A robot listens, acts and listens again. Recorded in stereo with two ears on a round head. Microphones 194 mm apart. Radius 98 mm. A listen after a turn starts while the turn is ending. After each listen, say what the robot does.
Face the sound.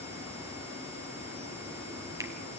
Turn 15° right.
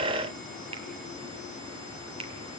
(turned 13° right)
Turn 150° right.
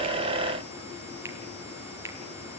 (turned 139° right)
Turn 10° right.
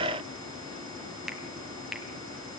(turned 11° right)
Facing the finger snap.